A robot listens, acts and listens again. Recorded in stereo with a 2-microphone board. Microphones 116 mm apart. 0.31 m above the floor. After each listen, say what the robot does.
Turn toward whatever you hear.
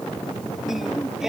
Turn 30° right.
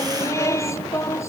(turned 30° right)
Turn 25° left.
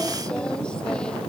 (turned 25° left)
Turn 10° left.
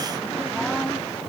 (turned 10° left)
Keep listening.
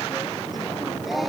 Found it: singing, straight ahead.